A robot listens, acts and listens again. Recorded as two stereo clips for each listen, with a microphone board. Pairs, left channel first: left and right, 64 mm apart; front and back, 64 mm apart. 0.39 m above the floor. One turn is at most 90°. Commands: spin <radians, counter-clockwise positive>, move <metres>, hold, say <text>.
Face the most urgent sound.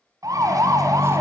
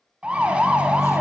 spin -1.57
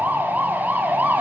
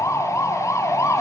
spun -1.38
spin -0.52
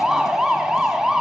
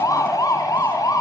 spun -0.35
spin -0.17
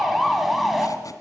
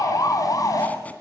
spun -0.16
say Found it: a siren, straight ahead.